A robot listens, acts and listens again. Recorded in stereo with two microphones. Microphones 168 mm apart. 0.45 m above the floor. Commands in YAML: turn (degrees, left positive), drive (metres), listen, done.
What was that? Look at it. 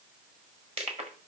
turn: -40
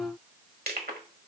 turn: -100
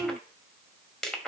done: "Found it: crushing, straight ahead, 1 to 2 m away."